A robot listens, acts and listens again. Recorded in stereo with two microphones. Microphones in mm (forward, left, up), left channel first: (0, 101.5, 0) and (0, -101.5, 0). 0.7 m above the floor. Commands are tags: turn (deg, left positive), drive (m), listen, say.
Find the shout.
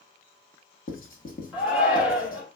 <turn deg="-30"/>
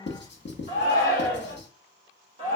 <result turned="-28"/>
<turn deg="-145"/>
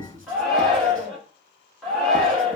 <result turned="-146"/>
<say>Facing the shout.</say>